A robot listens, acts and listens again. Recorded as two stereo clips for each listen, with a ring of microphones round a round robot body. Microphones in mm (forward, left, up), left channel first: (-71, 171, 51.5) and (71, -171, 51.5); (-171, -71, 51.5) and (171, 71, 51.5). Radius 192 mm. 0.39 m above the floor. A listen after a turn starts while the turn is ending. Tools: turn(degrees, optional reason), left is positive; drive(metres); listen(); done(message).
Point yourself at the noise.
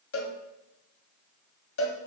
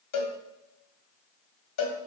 turn(degrees=165, reason="The cowbell: 165° left.")
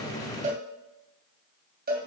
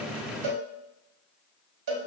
done("Facing the cowbell.")